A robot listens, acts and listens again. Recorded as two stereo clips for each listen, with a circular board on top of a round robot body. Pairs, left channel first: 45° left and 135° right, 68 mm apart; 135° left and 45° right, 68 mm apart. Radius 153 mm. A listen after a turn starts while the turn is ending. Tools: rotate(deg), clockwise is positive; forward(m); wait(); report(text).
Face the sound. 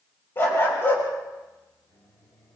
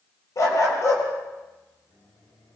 rotate(-100)
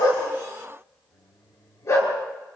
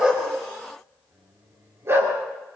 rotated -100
report("Found it: a dog barking, straight ahead, over 4 m away.")